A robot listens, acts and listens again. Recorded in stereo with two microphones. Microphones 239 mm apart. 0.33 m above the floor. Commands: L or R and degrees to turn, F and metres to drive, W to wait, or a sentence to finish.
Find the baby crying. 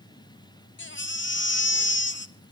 L50
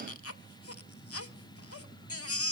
L75
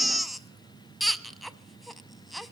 Found it: a baby crying, straight ahead, under 1 m away.